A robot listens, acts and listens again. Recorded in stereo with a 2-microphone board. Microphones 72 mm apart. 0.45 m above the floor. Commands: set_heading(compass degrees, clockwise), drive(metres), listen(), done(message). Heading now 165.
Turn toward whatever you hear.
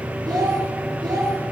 set_heading(255)
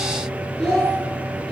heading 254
done("Facing the child speaking.")